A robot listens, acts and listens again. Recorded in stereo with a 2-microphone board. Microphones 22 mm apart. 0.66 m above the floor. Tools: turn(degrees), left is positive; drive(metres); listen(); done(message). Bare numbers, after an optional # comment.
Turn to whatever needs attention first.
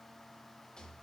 listen()
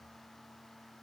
listen()
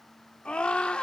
# The scream: about 65° left or 115° left.
turn(65)
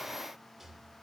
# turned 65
listen()
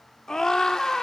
# So it is at 30° left.
turn(30)
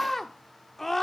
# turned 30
# The scream is now 10° left.
turn(10)
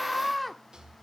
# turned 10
done("Facing the scream, 1 to 2 m away.")